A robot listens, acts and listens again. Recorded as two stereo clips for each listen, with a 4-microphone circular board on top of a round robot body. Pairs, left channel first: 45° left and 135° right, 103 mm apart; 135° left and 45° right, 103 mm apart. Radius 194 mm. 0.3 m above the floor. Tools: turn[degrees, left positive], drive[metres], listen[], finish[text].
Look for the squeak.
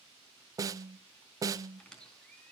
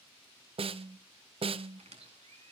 Thought: The squeak: 35° right.
Action: turn[-35]
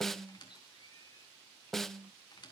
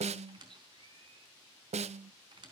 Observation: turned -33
Action: finish[Found it: a squeak, straight ahead, over 4 m away.]